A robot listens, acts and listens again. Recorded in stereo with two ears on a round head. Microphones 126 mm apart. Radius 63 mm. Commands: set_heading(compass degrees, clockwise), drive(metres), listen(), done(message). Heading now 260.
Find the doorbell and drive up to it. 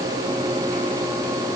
listen()
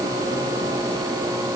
listen()
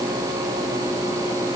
done("I can't make out a doorbell to turn to.")